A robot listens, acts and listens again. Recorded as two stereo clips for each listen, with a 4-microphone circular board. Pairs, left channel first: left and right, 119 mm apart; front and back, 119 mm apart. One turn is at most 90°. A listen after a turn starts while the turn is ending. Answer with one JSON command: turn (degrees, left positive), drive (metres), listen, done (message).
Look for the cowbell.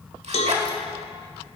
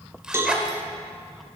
{"turn": 90}
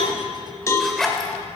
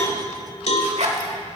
{"turn": 25}
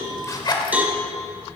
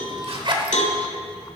{"turn": -10}
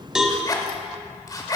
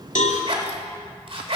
{"done": "Facing the cowbell."}